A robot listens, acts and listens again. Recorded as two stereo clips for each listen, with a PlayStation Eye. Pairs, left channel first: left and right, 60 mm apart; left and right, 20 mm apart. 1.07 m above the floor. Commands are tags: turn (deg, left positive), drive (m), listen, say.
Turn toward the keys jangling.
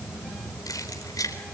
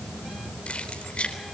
<turn deg="90"/>
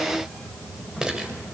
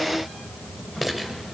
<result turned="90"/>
<turn deg="-10"/>
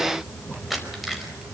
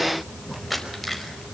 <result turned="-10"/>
<say>Found it: keys jangling, straight ahead, over 4 m away.</say>